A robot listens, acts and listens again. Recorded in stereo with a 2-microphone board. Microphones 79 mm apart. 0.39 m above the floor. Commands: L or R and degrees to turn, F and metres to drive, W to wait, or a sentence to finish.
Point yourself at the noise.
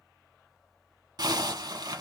R65
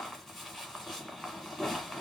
Found it: a zipper, straight ahead.